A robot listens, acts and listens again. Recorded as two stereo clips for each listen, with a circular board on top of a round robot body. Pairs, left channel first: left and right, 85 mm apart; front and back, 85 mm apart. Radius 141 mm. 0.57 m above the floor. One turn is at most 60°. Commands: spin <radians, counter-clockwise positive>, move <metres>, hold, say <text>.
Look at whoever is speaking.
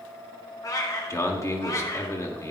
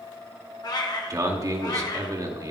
spin 1.05
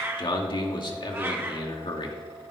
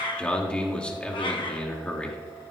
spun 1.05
spin 1.05
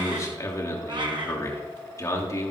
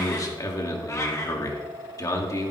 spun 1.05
spin 0.79
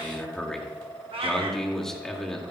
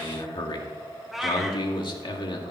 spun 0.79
say Facing the man speaking.